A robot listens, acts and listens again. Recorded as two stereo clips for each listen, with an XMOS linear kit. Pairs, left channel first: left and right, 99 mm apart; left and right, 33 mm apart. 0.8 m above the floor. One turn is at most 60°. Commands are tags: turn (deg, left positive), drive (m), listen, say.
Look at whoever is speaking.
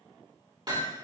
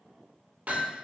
<listen/>
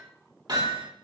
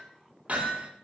<listen/>
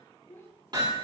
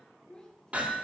<turn deg="30"/>
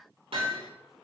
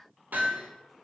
<listen/>
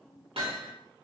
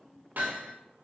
<listen/>
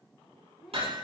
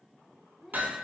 <say>Found it: a child speaking, straight ahead, 2 to 4 m away.</say>